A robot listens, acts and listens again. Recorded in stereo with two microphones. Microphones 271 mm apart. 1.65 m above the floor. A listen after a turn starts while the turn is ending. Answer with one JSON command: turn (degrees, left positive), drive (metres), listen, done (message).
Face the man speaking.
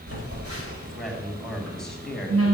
{"turn": 30}
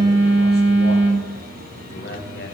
{"turn": 140}
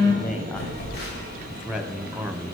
{"done": "Facing the man speaking."}